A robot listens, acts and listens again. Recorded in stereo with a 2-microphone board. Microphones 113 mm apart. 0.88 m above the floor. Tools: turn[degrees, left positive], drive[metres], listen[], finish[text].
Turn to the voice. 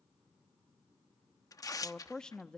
Action: turn[30]
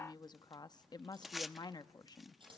Thought: So it is at 140° left.
Action: turn[140]
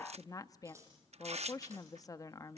Thought: The woman speaking is now 30° left.
Action: turn[30]
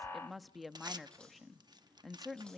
Action: finish[Facing the woman speaking, under 1 m away.]